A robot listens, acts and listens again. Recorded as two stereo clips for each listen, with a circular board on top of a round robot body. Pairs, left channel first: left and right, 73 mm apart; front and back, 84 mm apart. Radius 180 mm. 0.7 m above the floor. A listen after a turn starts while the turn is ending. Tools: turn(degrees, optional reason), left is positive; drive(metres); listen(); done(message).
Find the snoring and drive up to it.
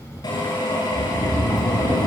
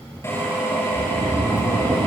turn(degrees=130, reason="The snoring: 130° left.")
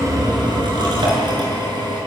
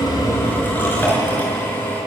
listen()
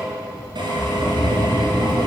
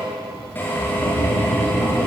drive(metres=1.0)
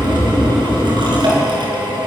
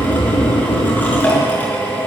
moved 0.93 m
drive(metres=1.0)
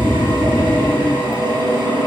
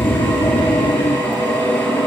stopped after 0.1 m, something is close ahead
turn(degrees=10, reason="The snoring is now 10° left.")
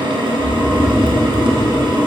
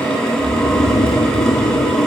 done("Arrived at the snoring, straight ahead.")